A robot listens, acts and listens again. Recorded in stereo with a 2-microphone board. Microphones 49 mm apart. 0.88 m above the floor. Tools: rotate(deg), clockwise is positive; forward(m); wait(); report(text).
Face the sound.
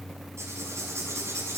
rotate(90)
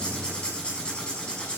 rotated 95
rotate(-20)
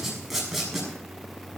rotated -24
report("Found it: writing, straight ahead, over 4 m away.")